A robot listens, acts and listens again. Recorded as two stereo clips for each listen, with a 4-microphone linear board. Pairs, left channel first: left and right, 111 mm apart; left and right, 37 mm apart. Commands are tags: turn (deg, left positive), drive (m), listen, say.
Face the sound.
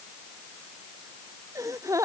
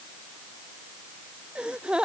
<turn deg="-30"/>
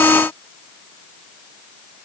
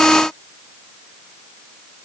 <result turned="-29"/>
<listen/>
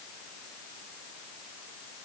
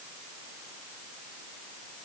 <say>I heard a gasp, but can't make it out now. It was about straight ahead or 120° right.</say>